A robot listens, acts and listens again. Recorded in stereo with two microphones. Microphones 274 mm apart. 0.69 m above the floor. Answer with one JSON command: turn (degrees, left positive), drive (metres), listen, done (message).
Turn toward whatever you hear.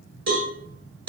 {"turn": -90}
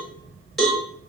{"done": "Found it: a cowbell, straight ahead, 1 to 2 m away."}